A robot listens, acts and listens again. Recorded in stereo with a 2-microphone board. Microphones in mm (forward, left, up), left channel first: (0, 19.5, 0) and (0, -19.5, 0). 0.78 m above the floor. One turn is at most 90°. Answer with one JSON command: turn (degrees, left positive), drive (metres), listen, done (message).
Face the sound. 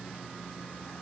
{"listen": true}
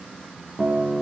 {"turn": -50}
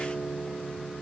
{"turn": -10}
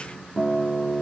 {"done": "Found it: a guitar, straight ahead."}